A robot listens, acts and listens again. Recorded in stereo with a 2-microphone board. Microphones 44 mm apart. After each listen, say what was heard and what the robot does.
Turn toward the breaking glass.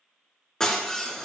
Turn 30° left.
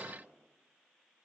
Keep listening.
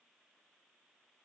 I heard breaking glass, but can't make it out now. It was about 15° right or 135° left.